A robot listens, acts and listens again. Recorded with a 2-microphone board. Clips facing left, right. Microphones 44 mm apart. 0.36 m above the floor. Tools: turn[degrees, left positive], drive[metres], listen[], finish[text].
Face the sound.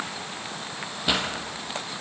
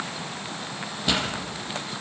Action: turn[30]
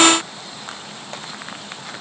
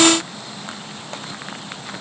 Action: listen[]
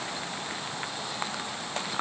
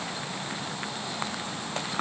Action: finish[I heard a pop, but can't make it out now. It was about 20° right or 140° left.]